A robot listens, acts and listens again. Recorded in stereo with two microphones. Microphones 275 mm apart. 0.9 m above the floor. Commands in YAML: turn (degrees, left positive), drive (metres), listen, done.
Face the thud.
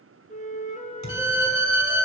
turn: 90
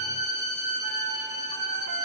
done: "Facing where the thud came from. I can't hear it now."